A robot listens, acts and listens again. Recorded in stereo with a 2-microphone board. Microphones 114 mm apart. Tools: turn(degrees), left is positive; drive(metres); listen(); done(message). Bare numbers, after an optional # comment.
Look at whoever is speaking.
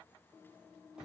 listen()
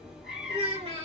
# The child speaking: about 65° right or 115° right.
turn(-65)
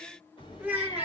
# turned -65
# So it is at 15° right.
turn(-15)
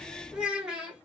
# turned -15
# The child speaking is now 10° right.
turn(-10)
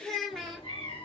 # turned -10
done("Found it: a child speaking, straight ahead, 1 to 2 m away.")